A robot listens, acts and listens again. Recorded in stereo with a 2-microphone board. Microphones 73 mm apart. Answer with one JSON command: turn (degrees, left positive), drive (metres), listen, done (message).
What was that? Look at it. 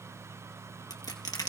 {"turn": 65}
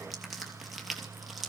{"done": "Facing the crushing."}